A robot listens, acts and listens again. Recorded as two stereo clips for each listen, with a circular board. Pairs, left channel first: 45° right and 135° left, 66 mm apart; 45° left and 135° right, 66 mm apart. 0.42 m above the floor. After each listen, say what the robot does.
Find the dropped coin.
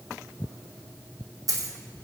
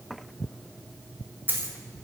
Turn 165° left.
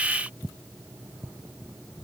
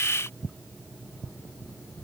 I heard a dropped coin from this way, but can't make it out now.